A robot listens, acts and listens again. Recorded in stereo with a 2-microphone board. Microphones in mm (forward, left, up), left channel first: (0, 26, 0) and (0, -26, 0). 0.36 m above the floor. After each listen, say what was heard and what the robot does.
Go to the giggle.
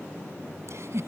The giggle: about 60° right or 120° right. Turn 60° right.
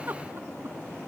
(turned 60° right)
So it is at 45° right. Turn 45° right.
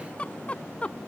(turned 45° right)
The giggle is now 25° left. Turn 25° left.
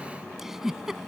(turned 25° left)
The giggle is now 10° right. Turn 10° right.
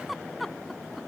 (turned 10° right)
Drive 1.0 m forward.
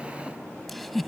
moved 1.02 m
Drive 1.0 m forward.
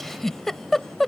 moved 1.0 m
Drive 1.0 m forward.
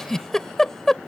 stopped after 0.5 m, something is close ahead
The giggle is now 15° left. Turn 15° left.
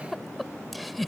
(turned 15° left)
I am next to the giggle.